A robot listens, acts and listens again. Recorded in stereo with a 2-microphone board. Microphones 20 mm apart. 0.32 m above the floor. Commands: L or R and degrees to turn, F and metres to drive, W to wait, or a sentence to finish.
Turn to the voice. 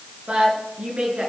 R65
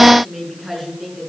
Facing the woman speaking.